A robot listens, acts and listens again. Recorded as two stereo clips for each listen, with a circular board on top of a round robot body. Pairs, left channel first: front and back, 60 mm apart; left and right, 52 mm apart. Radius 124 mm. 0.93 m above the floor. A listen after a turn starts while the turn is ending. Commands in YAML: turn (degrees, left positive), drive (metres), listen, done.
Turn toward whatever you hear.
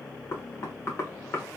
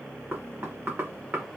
turn: -40
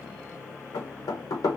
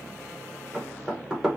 turn: -15
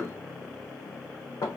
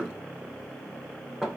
done: "Facing the knocking, under 1 m away."